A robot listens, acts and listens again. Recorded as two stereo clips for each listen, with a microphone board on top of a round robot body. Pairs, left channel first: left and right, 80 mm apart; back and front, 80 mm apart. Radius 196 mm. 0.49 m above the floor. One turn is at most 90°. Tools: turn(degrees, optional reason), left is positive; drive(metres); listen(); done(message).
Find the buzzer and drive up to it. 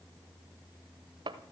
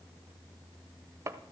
listen()
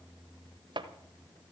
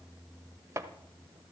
listen()
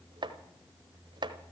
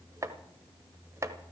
done("I can't make out a buzzer, only chopping.")